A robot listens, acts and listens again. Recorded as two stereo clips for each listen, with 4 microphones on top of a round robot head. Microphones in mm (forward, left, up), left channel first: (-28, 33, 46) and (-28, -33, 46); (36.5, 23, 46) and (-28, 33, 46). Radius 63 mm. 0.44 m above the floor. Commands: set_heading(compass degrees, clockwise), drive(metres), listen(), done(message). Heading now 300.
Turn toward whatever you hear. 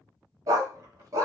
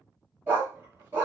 set_heading(65)
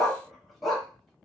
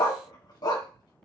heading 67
done("Found it: a dog barking, straight ahead, 1 to 2 m away.")